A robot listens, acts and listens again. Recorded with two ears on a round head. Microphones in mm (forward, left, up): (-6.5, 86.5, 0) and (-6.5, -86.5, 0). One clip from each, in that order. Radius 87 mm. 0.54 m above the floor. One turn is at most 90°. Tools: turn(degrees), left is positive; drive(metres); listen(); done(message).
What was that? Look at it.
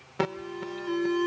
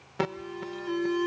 turn(degrees=30)
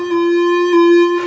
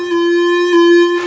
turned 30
turn(degrees=-30)
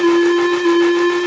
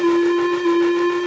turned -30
turn(degrees=25)
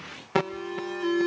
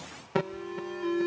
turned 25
turn(degrees=30)
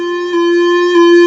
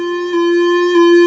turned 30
done("Facing the alarm.")